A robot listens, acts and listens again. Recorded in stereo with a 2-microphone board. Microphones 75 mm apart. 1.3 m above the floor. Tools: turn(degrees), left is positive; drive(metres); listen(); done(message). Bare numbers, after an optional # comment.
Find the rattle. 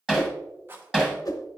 # The rattle: about 30° right or 150° right.
turn(-30)
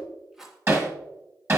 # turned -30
done("Found it: a rattle, straight ahead, 1 to 2 m away.")